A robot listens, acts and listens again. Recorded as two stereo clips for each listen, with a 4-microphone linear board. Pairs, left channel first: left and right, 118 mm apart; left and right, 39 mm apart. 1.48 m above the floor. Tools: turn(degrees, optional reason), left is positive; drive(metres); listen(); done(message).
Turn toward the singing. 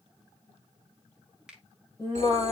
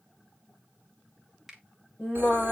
turn(degrees=30, reason="The singing: about 30° left or 150° left.")
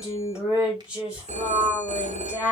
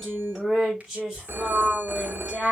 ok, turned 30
turn(degrees=-10, reason="So it is at 10° right.")
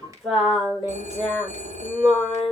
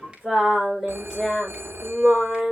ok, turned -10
done("Facing the singing, over 4 m away.")